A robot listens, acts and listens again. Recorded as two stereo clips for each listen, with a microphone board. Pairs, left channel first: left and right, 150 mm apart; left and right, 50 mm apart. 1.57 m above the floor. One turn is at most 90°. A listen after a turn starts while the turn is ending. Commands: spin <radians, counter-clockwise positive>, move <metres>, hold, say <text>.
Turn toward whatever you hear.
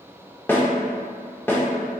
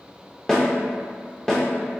spin 0.52
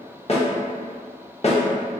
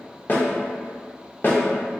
spin 1.57
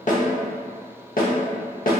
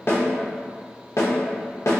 spin 1.22
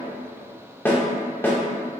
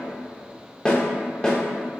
spin 0.26
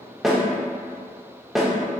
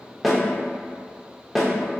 say Found it: a snare drum, straight ahead.